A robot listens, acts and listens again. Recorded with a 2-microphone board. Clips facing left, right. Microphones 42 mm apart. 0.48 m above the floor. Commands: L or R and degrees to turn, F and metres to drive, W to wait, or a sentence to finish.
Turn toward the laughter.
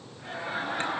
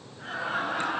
R65
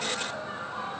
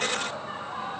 R55
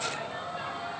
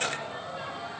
Facing the laughter, 2 to 4 m away.